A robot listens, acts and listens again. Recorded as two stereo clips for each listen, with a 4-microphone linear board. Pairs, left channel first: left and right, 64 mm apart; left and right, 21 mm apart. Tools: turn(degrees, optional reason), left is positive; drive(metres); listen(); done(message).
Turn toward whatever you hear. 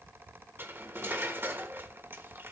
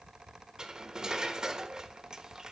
turn(degrees=-35, reason="The cutlery clinking: about 35° right or 145° right.")
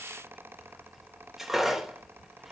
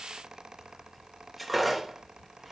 done("Facing the cutlery clinking, 1 to 2 m away.")